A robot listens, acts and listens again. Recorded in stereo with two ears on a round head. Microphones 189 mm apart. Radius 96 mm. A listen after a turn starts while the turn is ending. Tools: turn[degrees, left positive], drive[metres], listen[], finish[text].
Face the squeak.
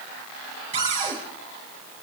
Action: listen[]
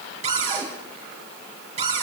Action: listen[]
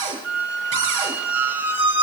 Action: turn[-30]
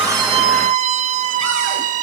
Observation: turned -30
Thought: So it is at 140° right.
Action: turn[-140]
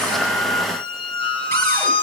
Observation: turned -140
Thought: The squeak is now 25° left.
Action: turn[25]
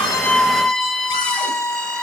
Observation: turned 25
Action: finish[Facing the squeak, 1 to 2 m away.]